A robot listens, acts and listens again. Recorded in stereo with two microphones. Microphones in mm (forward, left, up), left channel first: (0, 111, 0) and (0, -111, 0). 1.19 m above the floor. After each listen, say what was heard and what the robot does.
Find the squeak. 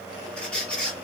Turn 30° left.
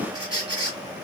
So it is at 25° right. Turn 25° right.
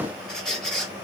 Facing the squeak.